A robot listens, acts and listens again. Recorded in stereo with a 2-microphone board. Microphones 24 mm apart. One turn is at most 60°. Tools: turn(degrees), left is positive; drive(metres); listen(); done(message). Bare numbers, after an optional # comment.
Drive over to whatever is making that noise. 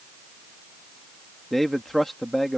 turn(30)
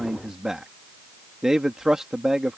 # So it is at 20° right.
turn(-20)
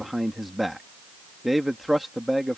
drive(1.0)
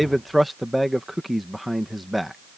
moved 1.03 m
drive(1.0)
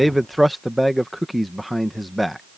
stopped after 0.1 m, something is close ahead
done("Arrived at the man speaking, straight ahead.")